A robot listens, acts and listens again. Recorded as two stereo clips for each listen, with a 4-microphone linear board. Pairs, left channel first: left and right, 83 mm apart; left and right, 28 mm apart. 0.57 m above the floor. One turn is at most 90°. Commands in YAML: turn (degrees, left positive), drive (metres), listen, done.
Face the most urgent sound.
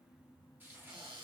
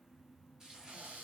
listen: true
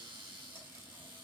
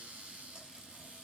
listen: true
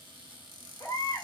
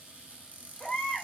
turn: 35
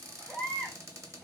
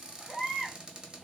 done: "Facing the baby crying."